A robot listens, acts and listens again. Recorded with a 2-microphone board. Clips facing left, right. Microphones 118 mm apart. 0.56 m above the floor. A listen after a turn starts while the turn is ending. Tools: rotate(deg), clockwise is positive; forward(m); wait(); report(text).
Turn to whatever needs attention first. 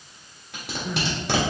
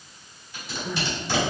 rotate(-30)
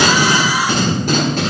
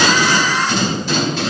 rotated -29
wait()
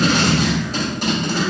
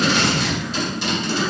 wait()
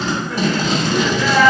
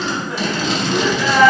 rotate(20)
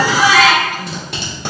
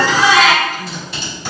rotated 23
report("Found it: crying, straight ahead, 1 to 2 m away.")